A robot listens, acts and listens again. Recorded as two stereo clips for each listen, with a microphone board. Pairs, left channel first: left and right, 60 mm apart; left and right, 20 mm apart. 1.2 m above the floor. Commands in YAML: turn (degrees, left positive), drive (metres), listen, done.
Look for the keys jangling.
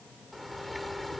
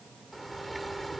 listen: true
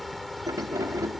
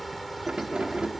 turn: -70
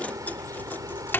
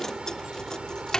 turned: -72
turn: 35
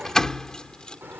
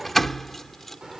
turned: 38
turn: 10
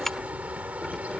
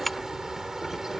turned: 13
done: "Found it: keys jangling, straight ahead."